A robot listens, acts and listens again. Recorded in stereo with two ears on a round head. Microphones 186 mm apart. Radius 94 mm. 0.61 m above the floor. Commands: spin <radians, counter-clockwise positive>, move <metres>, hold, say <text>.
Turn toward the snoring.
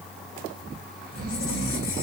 spin -0.79
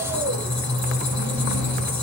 hold
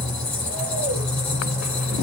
hold
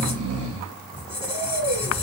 spin -1.57
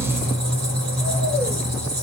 hold
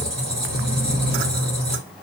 hold
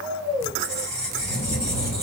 say Facing the snoring, under 1 m away.